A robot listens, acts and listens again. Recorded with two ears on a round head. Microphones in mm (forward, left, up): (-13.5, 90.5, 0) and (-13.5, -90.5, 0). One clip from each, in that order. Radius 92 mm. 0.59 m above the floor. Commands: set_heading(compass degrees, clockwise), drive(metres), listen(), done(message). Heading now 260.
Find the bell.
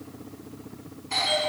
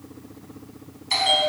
set_heading(320)
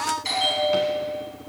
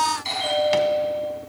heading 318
done("Found it: a bell, straight ahead, over 4 m away.")